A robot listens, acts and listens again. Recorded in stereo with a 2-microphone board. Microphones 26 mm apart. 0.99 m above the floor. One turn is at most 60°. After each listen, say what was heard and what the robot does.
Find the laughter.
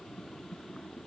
Keep listening.
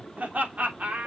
Turn 60° right.
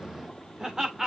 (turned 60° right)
So it is at 25° right. Turn 25° right.
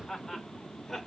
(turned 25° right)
Found it: laughter, straight ahead.